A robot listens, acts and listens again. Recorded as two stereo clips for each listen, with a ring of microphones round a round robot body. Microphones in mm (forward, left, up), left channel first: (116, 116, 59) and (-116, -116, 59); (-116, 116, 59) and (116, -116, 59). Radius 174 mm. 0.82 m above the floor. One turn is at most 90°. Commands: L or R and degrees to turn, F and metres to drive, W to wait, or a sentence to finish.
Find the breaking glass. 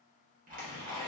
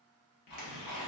W
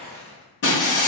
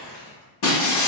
L90
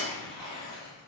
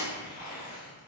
L10
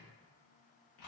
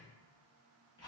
Facing where the breaking glass came from. I can't hear it now.